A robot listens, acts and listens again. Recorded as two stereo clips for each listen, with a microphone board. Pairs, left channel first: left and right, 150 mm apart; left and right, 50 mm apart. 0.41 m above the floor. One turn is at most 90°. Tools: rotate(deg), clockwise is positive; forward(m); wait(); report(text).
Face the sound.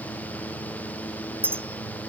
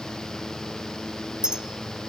rotate(30)
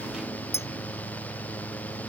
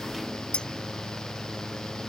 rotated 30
rotate(-20)
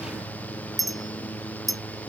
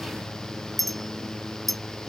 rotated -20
report("Facing the clink.")